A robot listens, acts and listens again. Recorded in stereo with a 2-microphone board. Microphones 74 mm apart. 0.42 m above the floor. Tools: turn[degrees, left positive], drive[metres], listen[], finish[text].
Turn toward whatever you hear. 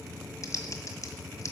Thought: The typing on a keyboard: about 45° left or 135° left.
Action: turn[45]
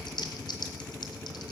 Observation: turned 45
Thought: So it is at 90° left.
Action: turn[90]
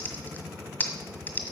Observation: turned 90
Thought: The typing on a keyboard is now 25° left.
Action: turn[25]
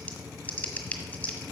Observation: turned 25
Thought: The typing on a keyboard is now 20° left.
Action: turn[20]
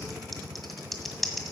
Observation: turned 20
Action: finish[Found it: typing on a keyboard, straight ahead, 1 to 2 m away.]